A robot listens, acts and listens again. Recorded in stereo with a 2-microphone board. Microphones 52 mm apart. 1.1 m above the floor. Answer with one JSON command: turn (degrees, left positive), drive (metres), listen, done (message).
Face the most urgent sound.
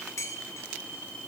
{"listen": true}
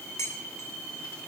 {"listen": true}
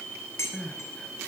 {"turn": 30}
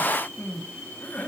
{"turn": 140}
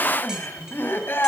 {"turn": 50}
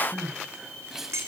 {"turn": -10}
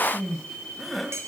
{"done": "Facing the crying, 2 to 4 m away."}